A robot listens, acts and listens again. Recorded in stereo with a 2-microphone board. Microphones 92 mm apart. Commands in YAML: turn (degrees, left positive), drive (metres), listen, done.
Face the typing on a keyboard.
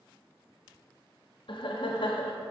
listen: true
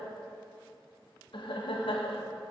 listen: true
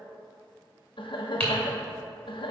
turn: 30
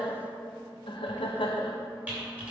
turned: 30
turn: -15
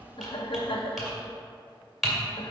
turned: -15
done: "Facing the typing on a keyboard, 1 to 2 m away."